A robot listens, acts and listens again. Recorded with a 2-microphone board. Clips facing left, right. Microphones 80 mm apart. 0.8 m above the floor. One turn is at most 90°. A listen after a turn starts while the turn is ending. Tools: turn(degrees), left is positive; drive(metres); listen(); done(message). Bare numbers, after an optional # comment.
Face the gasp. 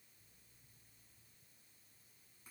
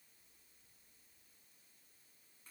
listen()
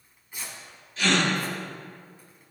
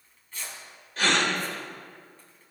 # The gasp: about 55° right or 125° right.
turn(-55)
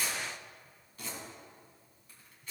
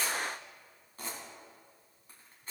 listen()
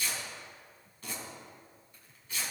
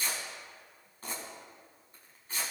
done("I heard a gasp, but can't make it out now. It was about straight ahead or 70° right.")